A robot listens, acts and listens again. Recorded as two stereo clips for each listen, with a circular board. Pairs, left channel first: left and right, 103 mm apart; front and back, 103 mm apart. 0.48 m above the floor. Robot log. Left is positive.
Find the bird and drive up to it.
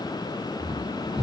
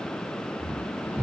cmd idle
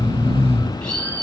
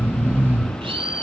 note: The bird: 170° left.
cmd yaw +170
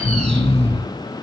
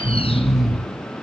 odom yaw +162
cmd idle
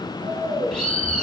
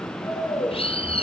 cmd fwd 1.0
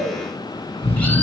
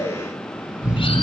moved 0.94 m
cmd idle
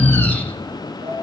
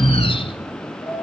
cmd idle
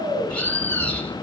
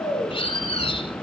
note: The bird is now 15° left.
cmd yaw +15
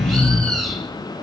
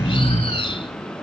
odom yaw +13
cmd fwd 1.0
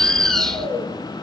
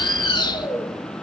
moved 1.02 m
cmd fwd 1.0
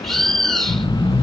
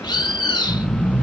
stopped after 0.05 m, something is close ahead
end: I am next to the bird.